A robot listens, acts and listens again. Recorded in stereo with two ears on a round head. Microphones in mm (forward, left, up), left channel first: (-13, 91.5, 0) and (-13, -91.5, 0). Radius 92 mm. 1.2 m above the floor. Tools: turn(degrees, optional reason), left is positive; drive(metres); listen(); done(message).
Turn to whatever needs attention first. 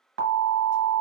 turn(degrees=-70, reason="The alarm: about 70° right or 110° right.")
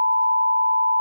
done("Facing the alarm.")